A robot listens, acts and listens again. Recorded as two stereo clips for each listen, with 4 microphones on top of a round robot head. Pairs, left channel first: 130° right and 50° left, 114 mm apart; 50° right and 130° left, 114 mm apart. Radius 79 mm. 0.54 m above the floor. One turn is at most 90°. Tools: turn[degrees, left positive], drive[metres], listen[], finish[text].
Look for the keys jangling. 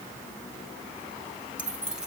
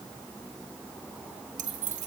Thought: The keys jangling: 135° left.
Action: turn[90]
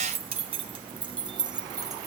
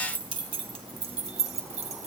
Thought: The keys jangling is now 105° left.
Action: turn[90]
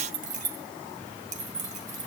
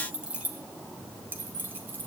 Thought: The keys jangling is now 60° left.
Action: turn[60]
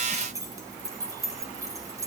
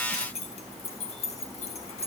Thought: The keys jangling is now 15° right.
Action: turn[-15]
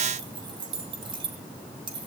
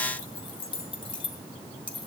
Action: finish[Found it: keys jangling, straight ahead, 2 to 4 m away.]